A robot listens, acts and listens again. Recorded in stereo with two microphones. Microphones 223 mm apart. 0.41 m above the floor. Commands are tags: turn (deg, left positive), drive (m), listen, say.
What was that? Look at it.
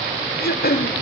<turn deg="45"/>
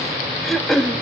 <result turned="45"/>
<say>Facing the throat clearing.</say>